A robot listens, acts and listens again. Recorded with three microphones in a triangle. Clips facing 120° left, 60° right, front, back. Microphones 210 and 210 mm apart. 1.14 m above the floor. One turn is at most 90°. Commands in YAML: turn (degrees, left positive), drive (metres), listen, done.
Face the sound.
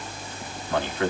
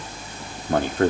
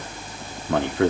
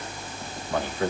turn: -15
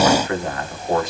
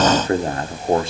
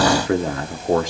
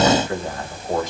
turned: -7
done: "Facing the man speaking."